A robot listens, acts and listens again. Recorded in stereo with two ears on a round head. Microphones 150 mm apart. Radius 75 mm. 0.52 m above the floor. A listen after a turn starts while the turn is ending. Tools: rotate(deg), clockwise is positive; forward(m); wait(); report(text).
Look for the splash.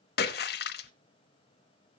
rotate(-65)
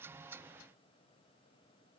wait()
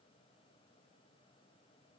report("I heard a splash, but can't make it out now. It was about straight ahead or 50° left.")